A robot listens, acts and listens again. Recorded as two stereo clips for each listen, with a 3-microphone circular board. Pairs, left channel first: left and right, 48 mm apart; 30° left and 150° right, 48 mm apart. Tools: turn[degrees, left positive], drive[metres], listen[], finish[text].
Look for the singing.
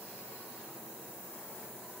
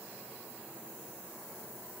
Action: listen[]
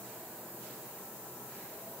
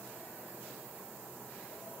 Action: listen[]
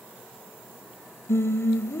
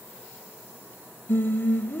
Thought: The singing: 75° left.
Action: turn[75]
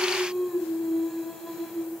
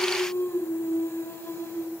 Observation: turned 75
Action: finish[Facing the singing, 2 to 4 m away.]